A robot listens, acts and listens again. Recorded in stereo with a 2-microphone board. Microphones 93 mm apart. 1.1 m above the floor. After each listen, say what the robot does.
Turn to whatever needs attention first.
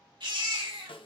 Turn 55° right.
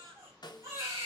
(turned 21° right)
Turn 35° right.
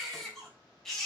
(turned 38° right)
Found it: a baby crying, straight ahead, 2 to 4 m away.